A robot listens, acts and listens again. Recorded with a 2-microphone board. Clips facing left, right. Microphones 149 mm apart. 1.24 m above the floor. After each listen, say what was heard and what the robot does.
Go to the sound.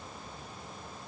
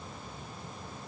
Keep listening.
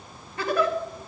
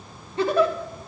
The giggle: about 30° right or 150° right. Turn 30° right.
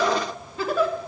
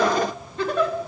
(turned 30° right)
Drive 1.0 m forward.
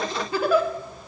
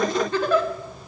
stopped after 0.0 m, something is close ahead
The giggle is now 10° left. Turn 10° left.
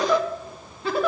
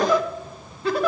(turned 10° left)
Something is in my way. I am facing the giggle but have not reached it.